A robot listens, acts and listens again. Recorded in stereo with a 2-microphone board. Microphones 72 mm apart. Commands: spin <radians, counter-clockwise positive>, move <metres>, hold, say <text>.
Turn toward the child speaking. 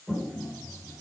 hold
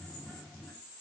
hold
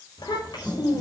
spin 1.57
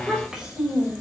spin -0.17
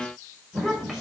say Found it: a child speaking, straight ahead.